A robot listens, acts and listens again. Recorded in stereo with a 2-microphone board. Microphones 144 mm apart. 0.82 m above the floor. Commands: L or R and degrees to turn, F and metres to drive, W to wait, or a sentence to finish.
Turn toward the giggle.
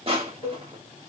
W
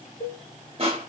W
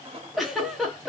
L30
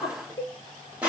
L150
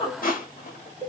L40
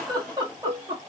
R30
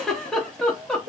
Found it: a giggle, straight ahead.